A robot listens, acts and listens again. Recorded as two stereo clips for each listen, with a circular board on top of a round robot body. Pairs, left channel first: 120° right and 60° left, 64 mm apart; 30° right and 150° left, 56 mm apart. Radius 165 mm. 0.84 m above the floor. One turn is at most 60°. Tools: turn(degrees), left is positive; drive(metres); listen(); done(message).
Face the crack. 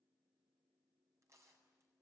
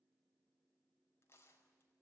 listen()
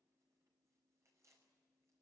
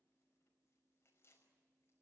listen()
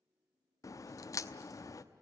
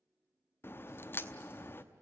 turn(degrees=-60)
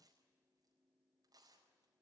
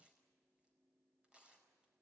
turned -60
turn(degrees=-25)
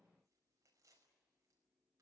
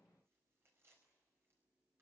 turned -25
done("Facing where the crack came from. I can't hear it now.")